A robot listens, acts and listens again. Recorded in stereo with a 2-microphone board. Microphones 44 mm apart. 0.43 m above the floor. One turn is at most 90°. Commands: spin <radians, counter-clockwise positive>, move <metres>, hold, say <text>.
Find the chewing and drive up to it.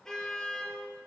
hold
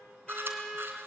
spin -0.87
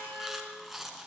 move 1.0
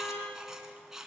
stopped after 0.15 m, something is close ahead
spin -0.17
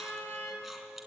hold
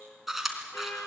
say Blocked. The chewing is further on, straight ahead.